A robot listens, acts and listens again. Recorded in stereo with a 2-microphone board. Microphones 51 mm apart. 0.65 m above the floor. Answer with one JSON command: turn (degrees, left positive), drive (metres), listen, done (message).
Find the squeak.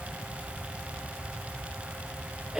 {"listen": true}
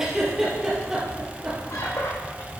{"turn": 65}
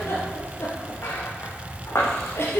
{"turn": 55}
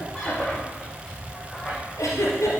{"turn": 10}
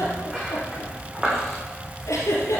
{"done": "Facing the squeak, 2 to 4 m away."}